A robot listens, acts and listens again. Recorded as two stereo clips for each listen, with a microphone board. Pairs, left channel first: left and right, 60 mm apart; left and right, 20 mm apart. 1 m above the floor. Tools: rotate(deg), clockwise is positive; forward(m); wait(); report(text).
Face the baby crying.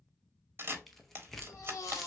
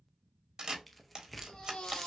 rotate(-50)
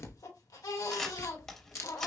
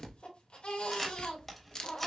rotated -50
rotate(-85)
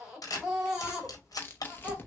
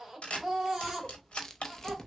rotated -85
rotate(10)
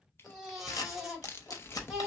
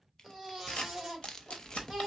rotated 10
report("Found it: a baby crying, straight ahead, 1 to 2 m away.")